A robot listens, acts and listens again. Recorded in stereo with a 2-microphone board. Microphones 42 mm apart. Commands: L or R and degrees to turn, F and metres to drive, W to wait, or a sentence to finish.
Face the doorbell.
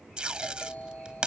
L35
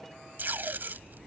W
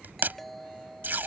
Found it: a doorbell, straight ahead.